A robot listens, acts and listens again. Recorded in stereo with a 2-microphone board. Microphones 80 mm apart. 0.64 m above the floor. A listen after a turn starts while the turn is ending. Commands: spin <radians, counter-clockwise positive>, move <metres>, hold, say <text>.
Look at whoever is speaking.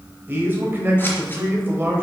spin -0.44
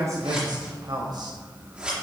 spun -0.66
spin -2.01
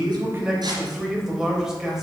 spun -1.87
say Facing the man speaking, 2 to 4 m away.